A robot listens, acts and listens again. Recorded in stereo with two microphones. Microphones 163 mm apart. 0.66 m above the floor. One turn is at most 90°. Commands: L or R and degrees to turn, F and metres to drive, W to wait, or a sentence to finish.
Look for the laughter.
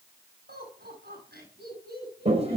R90
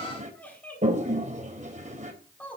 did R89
L10
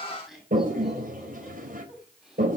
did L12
Found it: laughter, straight ahead.